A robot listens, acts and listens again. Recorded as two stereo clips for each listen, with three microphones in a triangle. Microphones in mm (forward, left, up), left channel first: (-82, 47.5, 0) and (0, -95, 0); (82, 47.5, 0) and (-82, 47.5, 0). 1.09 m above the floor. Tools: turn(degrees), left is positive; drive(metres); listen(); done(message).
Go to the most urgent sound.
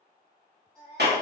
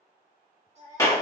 turn(degrees=-135)
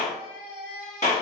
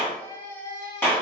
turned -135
turn(degrees=10)
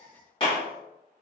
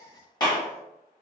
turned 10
drive(metres=1.0)
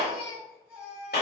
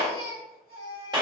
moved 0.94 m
turn(degrees=15)
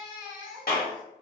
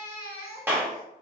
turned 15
drive(metres=1.0)
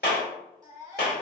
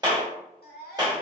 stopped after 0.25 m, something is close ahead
done("Arrived at the baby crying, straight ahead.")